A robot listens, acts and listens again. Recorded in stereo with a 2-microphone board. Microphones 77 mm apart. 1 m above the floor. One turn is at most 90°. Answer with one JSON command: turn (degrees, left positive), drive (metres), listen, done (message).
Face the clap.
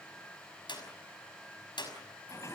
{"turn": 90}
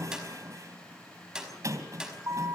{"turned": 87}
{"turn": -10}
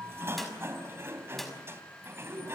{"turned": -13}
{"listen": true}
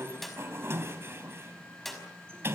{"done": "Facing the clap, over 4 m away."}